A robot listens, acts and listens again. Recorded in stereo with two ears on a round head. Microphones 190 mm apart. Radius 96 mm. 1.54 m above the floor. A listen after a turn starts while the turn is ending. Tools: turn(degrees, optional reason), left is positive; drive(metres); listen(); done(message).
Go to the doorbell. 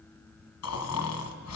listen()
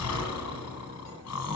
listen()
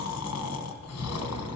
done("I can't make out a doorbell, only snoring.")